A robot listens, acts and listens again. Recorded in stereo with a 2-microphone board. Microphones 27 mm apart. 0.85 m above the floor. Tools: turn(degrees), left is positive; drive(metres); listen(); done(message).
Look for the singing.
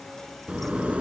listen()
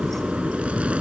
listen()
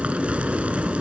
done("I can't make out singing to turn to.")